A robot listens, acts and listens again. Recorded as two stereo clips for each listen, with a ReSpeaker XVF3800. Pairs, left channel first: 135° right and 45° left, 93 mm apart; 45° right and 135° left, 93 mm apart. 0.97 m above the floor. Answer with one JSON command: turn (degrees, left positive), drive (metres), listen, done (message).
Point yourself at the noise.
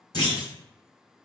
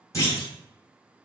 {"turn": -100}
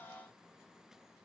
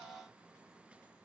{"done": "Facing where the clunk came from. I can't hear it now."}